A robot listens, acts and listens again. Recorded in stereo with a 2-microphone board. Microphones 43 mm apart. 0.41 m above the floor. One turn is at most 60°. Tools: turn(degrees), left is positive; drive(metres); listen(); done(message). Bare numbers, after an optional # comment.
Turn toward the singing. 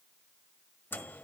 listen()
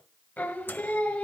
# The singing: about 35° left or 145° left.
turn(35)
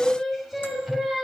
# So it is at 10° right.
turn(-10)
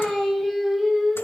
# The singing is now 10° right.
turn(-10)
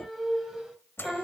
# The singing is now 15° right.
turn(-15)
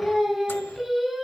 done("Found it: singing, straight ahead, 2 to 4 m away.")